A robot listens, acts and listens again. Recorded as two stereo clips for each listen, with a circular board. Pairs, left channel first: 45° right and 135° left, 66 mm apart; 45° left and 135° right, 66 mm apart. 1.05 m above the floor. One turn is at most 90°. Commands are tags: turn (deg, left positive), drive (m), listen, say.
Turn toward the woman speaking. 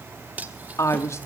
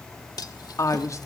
<say>Facing the woman speaking, 1 to 2 m away.</say>